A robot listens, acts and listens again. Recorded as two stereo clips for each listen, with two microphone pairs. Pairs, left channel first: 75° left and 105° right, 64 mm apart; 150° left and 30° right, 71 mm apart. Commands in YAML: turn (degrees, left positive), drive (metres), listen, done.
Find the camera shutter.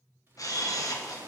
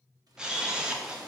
turn: 50
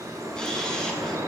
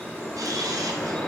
listen: true
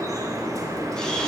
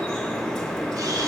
listen: true
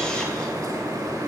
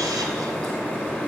done: "Facing where the camera shutter came from. I can't hear it now."